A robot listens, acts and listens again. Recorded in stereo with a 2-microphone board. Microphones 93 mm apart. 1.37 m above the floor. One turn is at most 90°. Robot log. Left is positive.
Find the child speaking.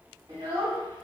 note: The child speaking: about 45° right or 135° right.
cmd yaw -45
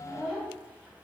note: So it is at 15° left.
cmd yaw +15
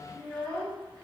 note: The child speaking is now 10° left.
cmd yaw +10
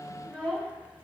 end: Found it: a child speaking, straight ahead, 2 to 4 m away.